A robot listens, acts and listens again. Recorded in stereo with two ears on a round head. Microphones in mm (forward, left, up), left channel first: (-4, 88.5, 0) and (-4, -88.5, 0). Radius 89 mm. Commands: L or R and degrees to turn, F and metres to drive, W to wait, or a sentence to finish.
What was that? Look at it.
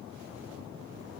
W
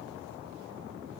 W
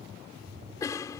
L15
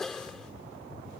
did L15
Found it: a cough, straight ahead.